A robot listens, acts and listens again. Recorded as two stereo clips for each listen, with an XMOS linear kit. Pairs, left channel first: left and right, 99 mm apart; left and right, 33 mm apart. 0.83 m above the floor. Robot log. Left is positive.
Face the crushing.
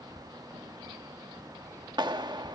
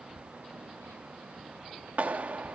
cmd idle
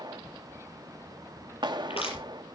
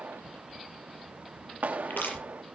cmd yaw +90
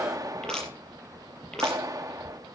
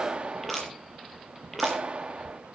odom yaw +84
note: So it is at 10° left.
cmd yaw +10
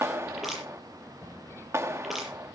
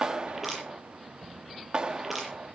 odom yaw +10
end: Found it: crushing, straight ahead, over 4 m away.